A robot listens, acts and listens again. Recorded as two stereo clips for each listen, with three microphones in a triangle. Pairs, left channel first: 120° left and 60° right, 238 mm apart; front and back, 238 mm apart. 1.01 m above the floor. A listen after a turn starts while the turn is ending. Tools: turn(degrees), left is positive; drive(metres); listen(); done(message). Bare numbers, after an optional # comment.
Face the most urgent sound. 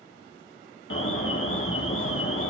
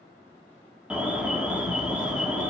# The alarm: 95° left.
turn(95)
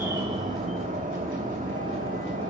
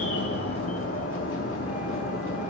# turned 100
done("Facing the alarm.")